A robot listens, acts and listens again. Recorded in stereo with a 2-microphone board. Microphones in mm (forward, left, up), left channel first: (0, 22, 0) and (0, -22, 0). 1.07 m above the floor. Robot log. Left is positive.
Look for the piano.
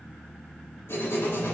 cmd idle
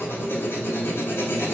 cmd idle
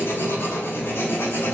end: I can't make out a piano to turn to.